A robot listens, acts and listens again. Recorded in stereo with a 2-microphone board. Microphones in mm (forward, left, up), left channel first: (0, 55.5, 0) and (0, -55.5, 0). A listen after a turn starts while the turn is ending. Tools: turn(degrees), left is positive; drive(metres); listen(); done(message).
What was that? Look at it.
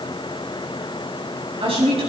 turn(degrees=-55)
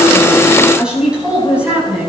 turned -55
turn(degrees=-15)
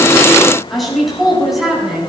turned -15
done("Facing the woman speaking, over 4 m away.")